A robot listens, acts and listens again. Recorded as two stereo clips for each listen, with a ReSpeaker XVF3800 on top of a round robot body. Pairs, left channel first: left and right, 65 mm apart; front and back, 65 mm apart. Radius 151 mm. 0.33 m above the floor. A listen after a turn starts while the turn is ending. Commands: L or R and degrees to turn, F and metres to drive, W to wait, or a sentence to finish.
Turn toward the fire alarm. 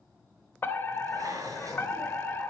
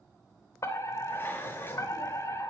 L35
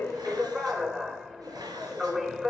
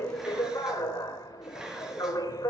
R10
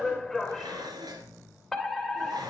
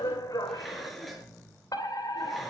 Facing the fire alarm.